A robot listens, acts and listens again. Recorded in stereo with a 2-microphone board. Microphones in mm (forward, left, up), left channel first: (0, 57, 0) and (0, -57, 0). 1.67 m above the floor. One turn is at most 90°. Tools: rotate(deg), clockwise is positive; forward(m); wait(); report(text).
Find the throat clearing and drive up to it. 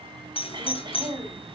rotate(40)
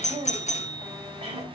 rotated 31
rotate(90)
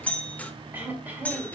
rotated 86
rotate(20)
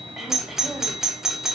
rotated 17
forward(1.0)
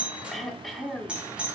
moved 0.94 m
forward(1.0)
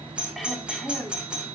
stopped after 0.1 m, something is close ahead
report("I am next to the throat clearing.")